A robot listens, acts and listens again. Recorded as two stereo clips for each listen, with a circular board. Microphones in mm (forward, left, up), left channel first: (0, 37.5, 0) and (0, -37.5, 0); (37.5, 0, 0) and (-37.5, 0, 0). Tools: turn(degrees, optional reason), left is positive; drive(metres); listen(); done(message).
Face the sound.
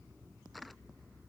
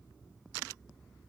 listen()
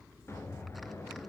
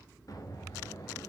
turn(degrees=35, reason="The explosion: 35° left.")
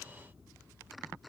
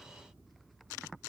done("Facing where the explosion came from. I can't hear it now.")